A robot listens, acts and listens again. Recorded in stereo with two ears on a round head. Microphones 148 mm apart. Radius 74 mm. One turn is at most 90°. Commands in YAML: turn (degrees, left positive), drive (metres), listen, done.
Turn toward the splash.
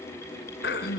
listen: true
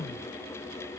listen: true
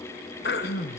done: "I can't make out a splash, only throat clearing."